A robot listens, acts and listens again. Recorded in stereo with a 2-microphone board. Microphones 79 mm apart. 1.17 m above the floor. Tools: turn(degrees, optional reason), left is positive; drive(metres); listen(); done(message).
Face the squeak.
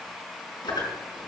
turn(degrees=70, reason="The squeak: about 70° left or 110° left.")
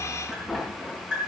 done("Found it: a squeak, straight ahead.")